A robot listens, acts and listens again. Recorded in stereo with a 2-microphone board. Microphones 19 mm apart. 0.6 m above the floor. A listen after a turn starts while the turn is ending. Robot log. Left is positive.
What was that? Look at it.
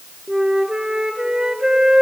note: The flute: about 45° right or 135° right.
cmd yaw -45
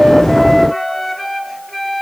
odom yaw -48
end: Facing the flute, 1 to 2 m away.